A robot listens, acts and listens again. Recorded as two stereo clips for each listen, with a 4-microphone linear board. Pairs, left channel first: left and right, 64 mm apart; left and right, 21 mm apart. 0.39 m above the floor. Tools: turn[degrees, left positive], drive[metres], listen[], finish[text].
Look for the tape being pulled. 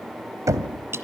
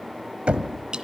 Action: listen[]
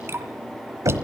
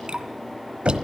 Action: listen[]
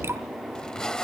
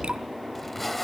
Action: turn[30]
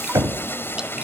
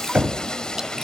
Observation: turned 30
Thought: So it is at 135° left.
Action: turn[135]
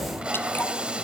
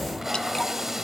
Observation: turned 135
Thought: The tape being pulled is now 15° right.
Action: turn[-15]
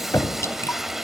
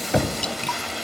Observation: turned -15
Action: finish[Facing the tape being pulled.]